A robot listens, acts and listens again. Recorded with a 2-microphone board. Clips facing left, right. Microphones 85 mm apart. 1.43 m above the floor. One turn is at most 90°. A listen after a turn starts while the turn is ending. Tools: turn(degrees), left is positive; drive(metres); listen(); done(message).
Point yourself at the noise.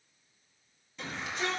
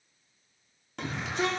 turn(degrees=-75)
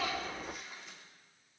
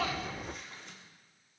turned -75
listen()
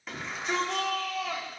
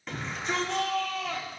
done("Facing the shout, 2 to 4 m away.")